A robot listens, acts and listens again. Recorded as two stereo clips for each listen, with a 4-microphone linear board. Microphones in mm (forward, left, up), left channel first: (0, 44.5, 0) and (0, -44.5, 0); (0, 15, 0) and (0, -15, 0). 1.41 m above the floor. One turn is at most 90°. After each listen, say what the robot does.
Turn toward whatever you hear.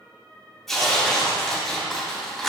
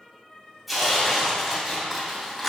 Turn 30° left.
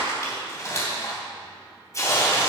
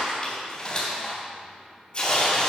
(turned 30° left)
Turn 90° left.
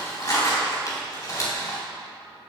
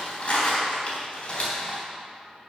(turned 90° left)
Turn 40° left.
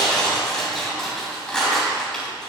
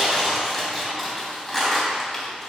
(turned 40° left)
Turn 10° left.
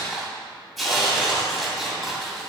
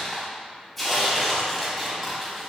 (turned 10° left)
Found it: tearing paper, straight ahead.